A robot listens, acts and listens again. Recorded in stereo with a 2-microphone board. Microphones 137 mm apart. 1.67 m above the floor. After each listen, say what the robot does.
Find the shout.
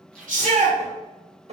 Turn 90° right.
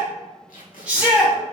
Turn 10° right.
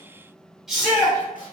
Found it: a shout, straight ahead.